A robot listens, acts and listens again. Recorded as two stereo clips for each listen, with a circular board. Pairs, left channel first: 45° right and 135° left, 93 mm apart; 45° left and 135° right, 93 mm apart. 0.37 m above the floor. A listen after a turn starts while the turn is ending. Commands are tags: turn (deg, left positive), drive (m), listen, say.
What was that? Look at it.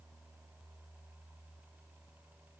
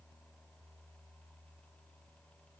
<listen/>
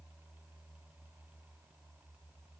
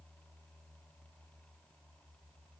<listen/>
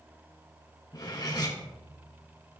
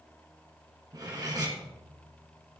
<turn deg="-90"/>
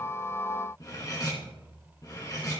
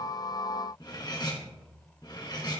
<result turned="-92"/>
<say>Facing the cutlery clinking.</say>